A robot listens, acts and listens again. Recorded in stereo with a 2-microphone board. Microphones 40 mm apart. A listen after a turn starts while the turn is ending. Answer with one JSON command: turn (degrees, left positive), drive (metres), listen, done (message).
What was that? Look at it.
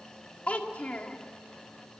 {"turn": 35}
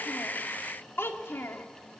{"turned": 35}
{"turn": 110}
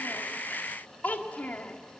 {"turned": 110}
{"turn": 45}
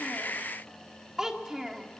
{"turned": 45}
{"turn": -10}
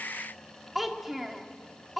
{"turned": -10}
{"done": "Facing the child speaking, 1 to 2 m away."}